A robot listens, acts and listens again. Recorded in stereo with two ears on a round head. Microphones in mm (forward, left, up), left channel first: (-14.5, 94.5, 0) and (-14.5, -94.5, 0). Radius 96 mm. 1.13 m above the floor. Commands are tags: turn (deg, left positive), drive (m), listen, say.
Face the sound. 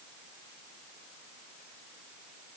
<listen/>
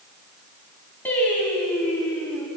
<turn deg="30"/>
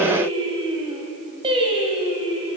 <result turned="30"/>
<turn deg="-25"/>
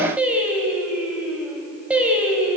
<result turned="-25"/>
<say>Found it: singing, straight ahead.</say>